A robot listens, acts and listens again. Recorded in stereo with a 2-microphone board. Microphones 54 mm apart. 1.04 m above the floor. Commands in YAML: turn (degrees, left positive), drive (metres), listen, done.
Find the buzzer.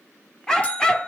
turn: 25
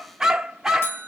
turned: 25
turn: 130
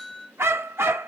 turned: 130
turn: 20
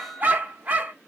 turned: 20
listen: true
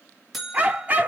done: "Found it: a buzzer, straight ahead, 2 to 4 m away."